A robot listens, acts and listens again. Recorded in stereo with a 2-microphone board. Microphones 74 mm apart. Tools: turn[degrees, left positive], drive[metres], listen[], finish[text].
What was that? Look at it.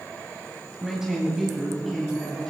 Action: turn[30]
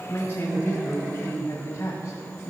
Thought: So it is at 130° left.
Action: turn[130]
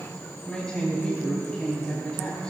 Thought: The man speaking is now 10° left.
Action: turn[10]
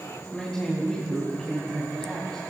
Action: finish[Facing the man speaking, 2 to 4 m away.]